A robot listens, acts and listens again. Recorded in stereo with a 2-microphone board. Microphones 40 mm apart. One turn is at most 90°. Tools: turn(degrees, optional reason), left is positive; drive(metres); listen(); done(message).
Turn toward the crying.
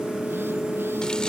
listen()
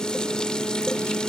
listen()
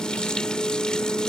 done("I can't make out crying to turn to.")